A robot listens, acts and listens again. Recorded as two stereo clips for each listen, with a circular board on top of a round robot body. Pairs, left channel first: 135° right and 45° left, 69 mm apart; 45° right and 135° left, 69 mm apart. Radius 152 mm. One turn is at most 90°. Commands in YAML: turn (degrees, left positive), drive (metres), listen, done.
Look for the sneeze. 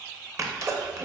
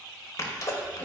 done: "Facing the sneeze, 1 to 2 m away."